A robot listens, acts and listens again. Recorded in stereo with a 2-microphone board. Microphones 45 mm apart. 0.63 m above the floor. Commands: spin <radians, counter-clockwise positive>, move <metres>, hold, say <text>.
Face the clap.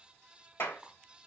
spin 1.05
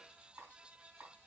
hold
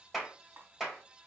say Facing the clap, 2 to 4 m away.